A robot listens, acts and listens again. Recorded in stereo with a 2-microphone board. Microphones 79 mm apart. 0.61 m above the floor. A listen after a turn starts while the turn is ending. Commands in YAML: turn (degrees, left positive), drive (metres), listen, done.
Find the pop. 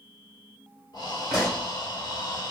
turn: 30
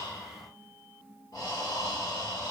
listen: true
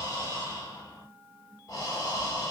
done: "I heard a pop, but can't make it out now. It was about 25° right or 145° left."